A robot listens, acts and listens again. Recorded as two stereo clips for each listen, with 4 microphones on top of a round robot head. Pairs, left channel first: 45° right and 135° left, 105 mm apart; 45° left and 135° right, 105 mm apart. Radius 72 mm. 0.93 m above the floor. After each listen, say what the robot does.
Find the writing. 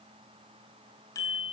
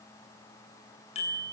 Keep listening.
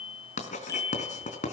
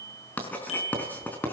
Turn 35° right.
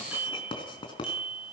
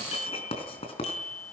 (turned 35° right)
Found it: writing, straight ahead.